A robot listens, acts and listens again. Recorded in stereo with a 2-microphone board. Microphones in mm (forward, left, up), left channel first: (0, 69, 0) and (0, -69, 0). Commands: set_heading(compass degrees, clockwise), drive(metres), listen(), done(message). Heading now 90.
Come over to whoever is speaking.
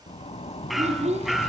set_heading(145)
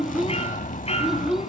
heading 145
drive(1.0)
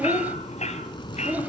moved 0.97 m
set_heading(160)
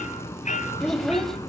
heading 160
drive(1.0)
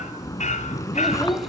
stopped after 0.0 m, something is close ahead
listen()
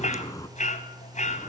listen()
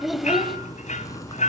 done("I am next to the child speaking.")